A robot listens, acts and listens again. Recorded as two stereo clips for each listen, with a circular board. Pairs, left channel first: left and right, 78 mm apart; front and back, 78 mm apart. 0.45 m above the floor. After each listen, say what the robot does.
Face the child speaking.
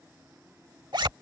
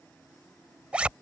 Keep listening.
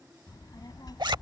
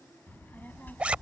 Turn 70° left.
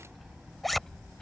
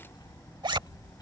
Turn 10° left.
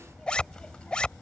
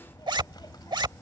Turn 20° left.
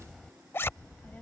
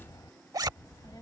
Turn 25° left.
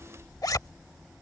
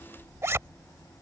Found it: a child speaking, straight ahead.